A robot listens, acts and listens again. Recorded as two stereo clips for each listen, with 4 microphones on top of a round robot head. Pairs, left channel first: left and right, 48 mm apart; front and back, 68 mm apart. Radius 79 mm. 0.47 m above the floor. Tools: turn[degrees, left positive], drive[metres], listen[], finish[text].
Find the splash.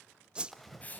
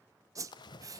Action: finish[Found it: a splash, straight ahead.]